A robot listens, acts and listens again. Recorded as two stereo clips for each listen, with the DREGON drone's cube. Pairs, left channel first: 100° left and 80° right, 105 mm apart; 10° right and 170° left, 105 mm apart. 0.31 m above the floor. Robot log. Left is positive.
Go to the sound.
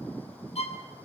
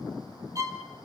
note: The violin: 110° left.
cmd yaw +110
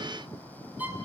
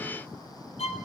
cmd fwd 1.0
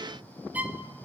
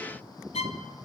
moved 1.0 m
cmd fwd 1.0
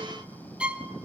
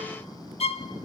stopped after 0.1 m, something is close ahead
end: Arrived at the violin, straight ahead.